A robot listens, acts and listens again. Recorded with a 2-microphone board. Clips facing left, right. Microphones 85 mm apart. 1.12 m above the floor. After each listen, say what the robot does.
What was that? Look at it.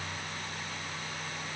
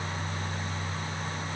Keep listening.
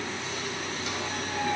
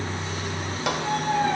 Turn 70° right.
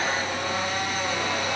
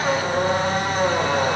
Turn 40° right.
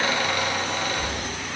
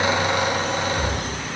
Turn 20° right.
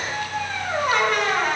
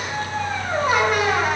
Found it: a squeak, straight ahead, 2 to 4 m away.